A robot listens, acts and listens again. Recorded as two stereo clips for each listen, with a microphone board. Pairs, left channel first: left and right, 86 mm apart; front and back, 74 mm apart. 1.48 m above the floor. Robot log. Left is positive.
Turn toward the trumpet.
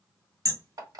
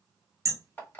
cmd idle
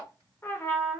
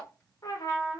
note: The trumpet: 30° left.
cmd yaw +30
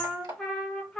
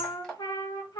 end: Found it: a trumpet, straight ahead.